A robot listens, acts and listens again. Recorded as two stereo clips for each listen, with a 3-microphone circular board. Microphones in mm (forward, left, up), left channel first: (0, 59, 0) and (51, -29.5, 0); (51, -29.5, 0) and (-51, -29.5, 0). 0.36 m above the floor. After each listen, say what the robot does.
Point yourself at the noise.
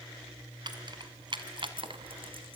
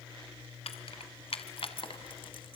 Turn 30° right.
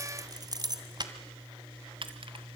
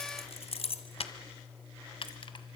Turn 30° right.
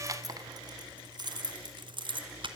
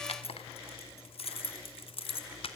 Turn 25° right.
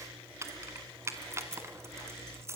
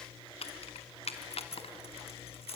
Found it: keys jangling, straight ahead.